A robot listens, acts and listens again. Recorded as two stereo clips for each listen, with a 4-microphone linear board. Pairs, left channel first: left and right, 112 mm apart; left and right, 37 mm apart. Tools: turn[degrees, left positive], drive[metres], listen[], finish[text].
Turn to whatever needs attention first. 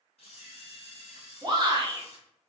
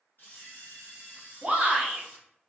Thought: The shout: about 35° right or 145° right.
Action: turn[-35]
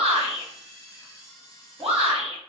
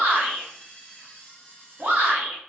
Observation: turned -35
Thought: So it is at 100° right.
Action: turn[-100]
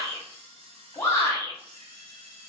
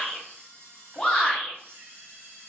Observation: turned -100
Thought: The shout is now 25° left.
Action: turn[25]
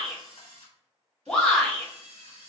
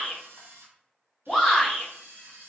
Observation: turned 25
Action: finish[Found it: a shout, straight ahead, 1 to 2 m away.]